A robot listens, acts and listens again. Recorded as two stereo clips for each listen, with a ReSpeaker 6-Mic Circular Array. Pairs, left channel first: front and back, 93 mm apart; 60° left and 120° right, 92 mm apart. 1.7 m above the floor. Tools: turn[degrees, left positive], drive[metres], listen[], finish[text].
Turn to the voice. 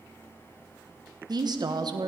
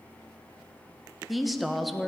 Thought: The woman speaking: 150° left.
Action: turn[150]
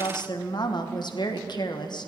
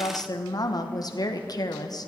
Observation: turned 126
Thought: The woman speaking is now 25° left.
Action: turn[25]
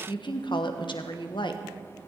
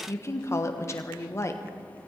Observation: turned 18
Action: finish[Found it: a woman speaking, straight ahead.]